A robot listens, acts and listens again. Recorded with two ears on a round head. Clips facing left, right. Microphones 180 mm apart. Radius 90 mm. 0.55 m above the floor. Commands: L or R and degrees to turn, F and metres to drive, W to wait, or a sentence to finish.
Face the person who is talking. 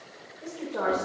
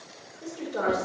R30
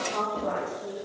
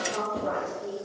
R25
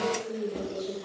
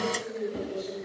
R20
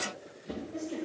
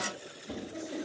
R20
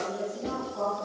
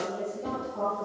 R10
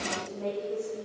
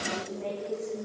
Facing the woman speaking.